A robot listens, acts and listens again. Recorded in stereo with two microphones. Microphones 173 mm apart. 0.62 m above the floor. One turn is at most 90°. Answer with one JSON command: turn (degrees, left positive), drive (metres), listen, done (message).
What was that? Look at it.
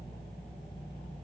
{"listen": true}
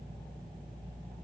{"listen": true}
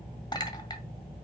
{"turn": 25}
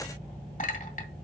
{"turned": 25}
{"turn": 90}
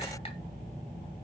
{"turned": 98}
{"turn": 35}
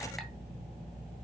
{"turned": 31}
{"listen": true}
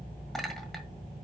{"done": "Facing the clink."}